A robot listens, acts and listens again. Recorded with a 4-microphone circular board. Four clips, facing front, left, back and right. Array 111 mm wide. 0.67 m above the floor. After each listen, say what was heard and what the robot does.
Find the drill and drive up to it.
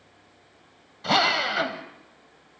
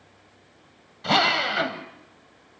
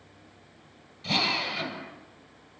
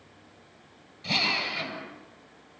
The drill: 40° left. Turn 40° left.
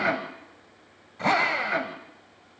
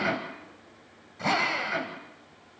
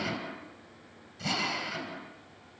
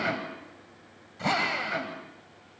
Drive 1.0 m forward.
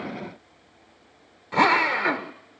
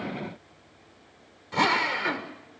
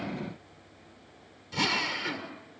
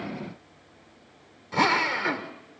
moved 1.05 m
Drive 1.0 m forward.
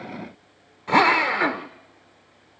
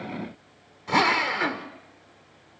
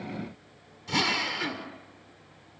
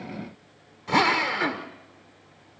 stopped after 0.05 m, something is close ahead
I am next to the drill.